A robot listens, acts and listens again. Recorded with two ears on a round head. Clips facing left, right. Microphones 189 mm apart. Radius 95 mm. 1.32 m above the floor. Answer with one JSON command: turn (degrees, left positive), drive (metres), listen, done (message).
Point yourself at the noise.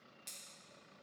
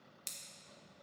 {"turn": -60}
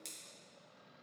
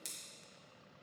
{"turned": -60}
{"done": "Facing the scissors."}